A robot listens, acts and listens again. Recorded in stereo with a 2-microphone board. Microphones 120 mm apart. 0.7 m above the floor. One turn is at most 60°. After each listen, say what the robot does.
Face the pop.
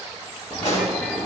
Turn 60° left.
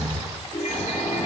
Turn 30° left.
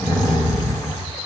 Facing where the pop came from. I can't hear it now.